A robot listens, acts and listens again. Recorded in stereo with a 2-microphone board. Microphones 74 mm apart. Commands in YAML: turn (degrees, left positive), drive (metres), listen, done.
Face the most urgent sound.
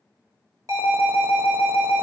turn: -50
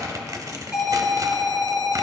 turn: -15
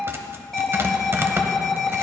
done: "Found it: an alarm, straight ahead."